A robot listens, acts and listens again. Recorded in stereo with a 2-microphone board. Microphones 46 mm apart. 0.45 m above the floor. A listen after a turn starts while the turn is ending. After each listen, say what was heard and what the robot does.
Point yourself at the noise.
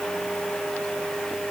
Keep listening.
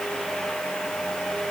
Keep listening.
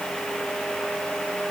I can't make out anything to turn to.